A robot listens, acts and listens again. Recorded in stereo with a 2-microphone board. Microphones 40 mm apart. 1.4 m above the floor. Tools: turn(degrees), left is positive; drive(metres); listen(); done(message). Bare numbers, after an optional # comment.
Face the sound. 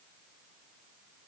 listen()
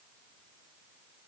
listen()
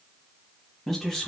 # The man speaking: about 15° left or 165° left.
turn(15)
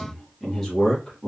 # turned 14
# The man speaking: about 15° left or 165° left.
turn(15)
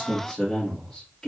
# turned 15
turn(30)
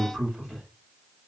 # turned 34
# So it is at 20° right.
turn(-20)
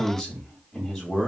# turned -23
done("Facing the man speaking.")